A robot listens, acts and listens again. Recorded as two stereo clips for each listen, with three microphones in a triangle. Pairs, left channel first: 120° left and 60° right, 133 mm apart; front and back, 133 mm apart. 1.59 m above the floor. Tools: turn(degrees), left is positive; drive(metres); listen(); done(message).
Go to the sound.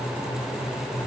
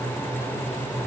listen()
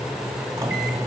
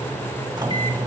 turn(degrees=-125)
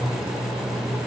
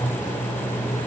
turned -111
turn(degrees=-15)
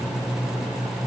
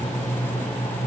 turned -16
drive(metres=1.0)
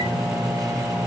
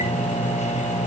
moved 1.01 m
drive(metres=1.0)
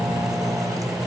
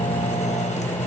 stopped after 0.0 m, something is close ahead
done("I am next to the microwave.")